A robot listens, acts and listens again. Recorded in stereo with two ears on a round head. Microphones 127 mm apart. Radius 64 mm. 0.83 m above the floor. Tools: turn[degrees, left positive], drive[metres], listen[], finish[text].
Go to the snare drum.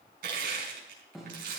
Action: turn[30]
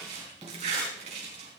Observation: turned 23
Thought: So it is at 25° right.
Action: turn[-25]
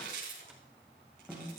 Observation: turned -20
Action: drive[1.0]
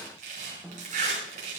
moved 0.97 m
Action: drive[1.0]
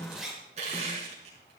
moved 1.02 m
Thought: The snare drum is now 10° right.
Action: turn[-10]
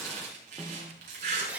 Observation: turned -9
Action: drive[1.0]
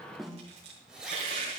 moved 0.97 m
Action: drive[1.0]
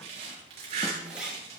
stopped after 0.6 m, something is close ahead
Action: listen[]
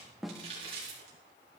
Action: finish[Arrived at the snare drum, straight ahead.]